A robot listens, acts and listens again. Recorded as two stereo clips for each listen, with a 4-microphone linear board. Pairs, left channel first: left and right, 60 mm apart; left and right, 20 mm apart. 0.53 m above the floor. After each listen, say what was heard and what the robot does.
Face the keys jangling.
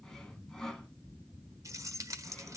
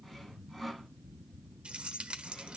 The keys jangling: about 60° right or 120° right. Turn 60° right.
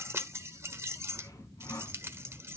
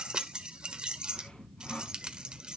So it is at 50° right. Turn 50° right.
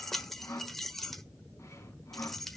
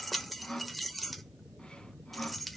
Found it: keys jangling, straight ahead.